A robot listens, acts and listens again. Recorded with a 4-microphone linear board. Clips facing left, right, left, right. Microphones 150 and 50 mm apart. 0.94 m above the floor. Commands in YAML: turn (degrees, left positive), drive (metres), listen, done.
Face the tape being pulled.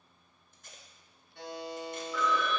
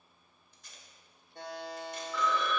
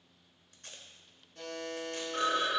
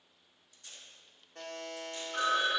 turn: 50
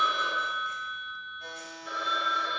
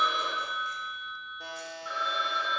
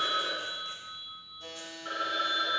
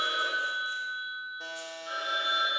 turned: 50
listen: true
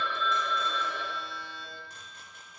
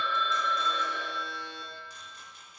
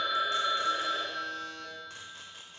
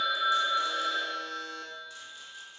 listen: true
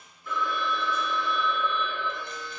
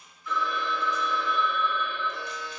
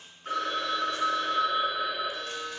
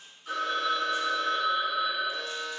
done: "I heard tape being pulled, but can't make it out now. It was about straight ahead or 80° left."